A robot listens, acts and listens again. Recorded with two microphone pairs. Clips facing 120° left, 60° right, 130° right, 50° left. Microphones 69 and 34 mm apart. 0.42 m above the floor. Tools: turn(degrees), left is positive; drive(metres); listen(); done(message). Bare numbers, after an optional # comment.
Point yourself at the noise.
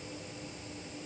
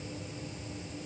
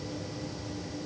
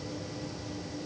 listen()
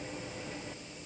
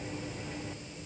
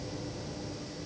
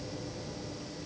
listen()
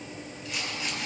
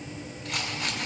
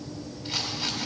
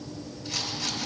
# The rattle: 75° right.
turn(-75)
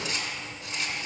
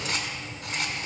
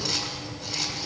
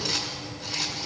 # The rattle is now 40° right.
turn(-40)
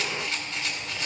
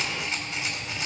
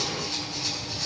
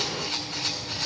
# The rattle is now 10° left.
turn(10)
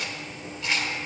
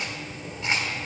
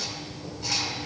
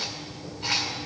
done("Facing the rattle.")